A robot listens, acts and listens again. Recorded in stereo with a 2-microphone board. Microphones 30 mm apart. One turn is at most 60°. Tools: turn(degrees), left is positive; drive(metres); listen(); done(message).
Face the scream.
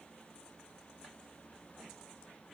listen()
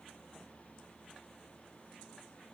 listen()
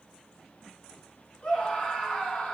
turn(degrees=35)
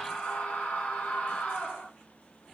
turn(degrees=60)
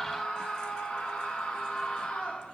turn(degrees=40)
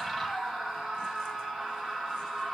turn(degrees=-10)
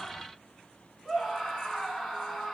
done("Found it: a scream, straight ahead, 2 to 4 m away.")